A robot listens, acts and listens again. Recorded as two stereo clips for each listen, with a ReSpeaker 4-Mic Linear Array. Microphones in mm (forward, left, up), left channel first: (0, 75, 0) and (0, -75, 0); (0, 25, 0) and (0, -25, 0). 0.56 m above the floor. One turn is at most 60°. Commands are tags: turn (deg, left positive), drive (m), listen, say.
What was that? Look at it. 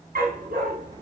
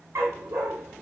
<turn deg="-60"/>
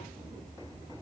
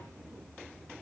<turn deg="-30"/>
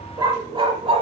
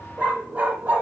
<turn deg="-45"/>
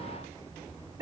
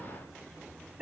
<turn deg="-25"/>
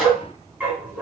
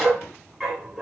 <turn deg="-15"/>
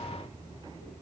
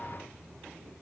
<listen/>
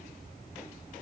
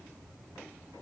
<listen/>
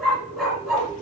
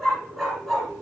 <say>Facing the dog barking, 2 to 4 m away.</say>